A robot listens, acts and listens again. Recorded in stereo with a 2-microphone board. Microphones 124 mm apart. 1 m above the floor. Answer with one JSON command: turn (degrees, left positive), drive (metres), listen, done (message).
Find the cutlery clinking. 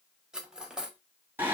{"turn": -30}
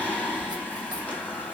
{"listen": true}
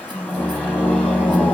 {"listen": true}
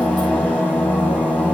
{"done": "I heard cutlery clinking, but can't make it out now. It was about 25° left or 145° right."}